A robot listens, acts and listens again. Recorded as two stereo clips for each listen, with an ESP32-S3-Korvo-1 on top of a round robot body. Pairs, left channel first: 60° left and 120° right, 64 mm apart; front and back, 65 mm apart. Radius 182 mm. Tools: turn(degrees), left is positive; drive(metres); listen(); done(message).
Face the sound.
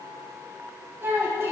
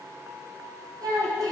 turn(degrees=-170)
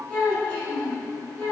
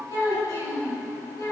turn(degrees=-10)
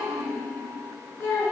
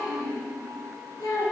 done("Facing the child speaking, over 4 m away.")